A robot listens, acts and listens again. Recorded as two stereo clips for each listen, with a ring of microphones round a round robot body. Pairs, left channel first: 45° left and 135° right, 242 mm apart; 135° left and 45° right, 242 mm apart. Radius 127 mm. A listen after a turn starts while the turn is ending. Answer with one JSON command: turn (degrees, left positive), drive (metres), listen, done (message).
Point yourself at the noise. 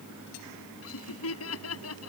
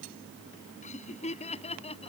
{"turn": 70}
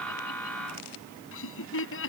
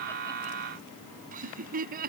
{"turn": 10}
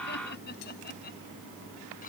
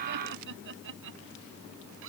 {"done": "Facing the laughter."}